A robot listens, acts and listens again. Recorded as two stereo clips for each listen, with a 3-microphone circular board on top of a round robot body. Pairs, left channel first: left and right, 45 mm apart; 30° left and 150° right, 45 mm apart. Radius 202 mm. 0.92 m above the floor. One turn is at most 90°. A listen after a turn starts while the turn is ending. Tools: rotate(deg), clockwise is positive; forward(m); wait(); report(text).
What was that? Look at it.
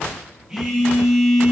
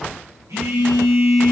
rotate(90)
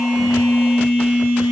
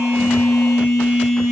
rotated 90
rotate(90)
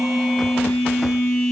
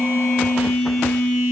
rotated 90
report("Facing the phone buzzing, 1 to 2 m away.")